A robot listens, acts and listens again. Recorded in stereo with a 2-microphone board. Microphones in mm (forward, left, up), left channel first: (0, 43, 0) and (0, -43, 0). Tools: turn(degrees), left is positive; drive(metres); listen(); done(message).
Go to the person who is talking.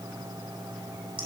listen()
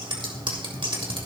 listen()
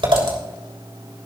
done("I can't make out anyone speaking to turn to.")